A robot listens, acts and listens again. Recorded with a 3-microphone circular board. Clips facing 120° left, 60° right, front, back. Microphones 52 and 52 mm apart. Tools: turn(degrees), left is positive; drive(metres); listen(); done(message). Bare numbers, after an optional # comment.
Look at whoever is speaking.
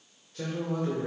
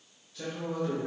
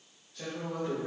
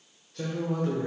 # The man speaking: 160° left.
turn(160)
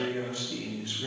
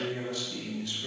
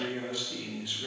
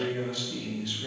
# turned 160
# The man speaking is now 75° left.
turn(75)
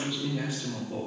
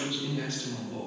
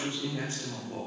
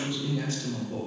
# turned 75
# The man speaking is now 55° left.
turn(55)
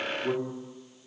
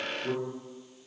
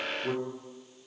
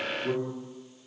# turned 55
# The man speaking is now 40° left.
turn(40)
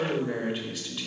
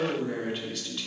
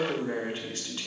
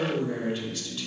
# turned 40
# The man speaking is now 40° left.
turn(40)
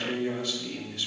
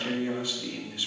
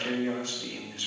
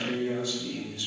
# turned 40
# The man speaking is now 10° left.
turn(10)
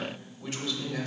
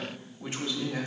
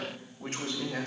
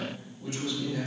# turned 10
done("Facing the man speaking.")